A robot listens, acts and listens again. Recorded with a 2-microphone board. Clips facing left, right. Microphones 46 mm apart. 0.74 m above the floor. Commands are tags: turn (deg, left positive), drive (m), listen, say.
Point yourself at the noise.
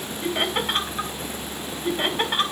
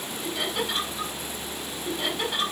<turn deg="45"/>
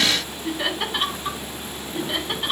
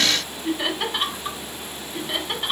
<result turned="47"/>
<say>Found it: laughter, straight ahead, over 4 m away.</say>